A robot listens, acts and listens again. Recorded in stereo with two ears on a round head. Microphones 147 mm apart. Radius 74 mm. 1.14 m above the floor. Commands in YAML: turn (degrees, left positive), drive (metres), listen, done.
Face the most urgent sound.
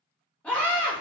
turn: 30
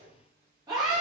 turn: -20
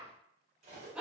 done: "Facing the scream, under 1 m away."